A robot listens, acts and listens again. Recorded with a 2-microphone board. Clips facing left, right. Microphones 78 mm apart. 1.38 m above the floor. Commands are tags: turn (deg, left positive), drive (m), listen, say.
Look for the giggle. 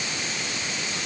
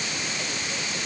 <listen/>
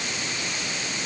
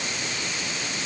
<listen/>
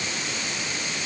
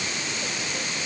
<say>I can't make out a giggle to turn to.</say>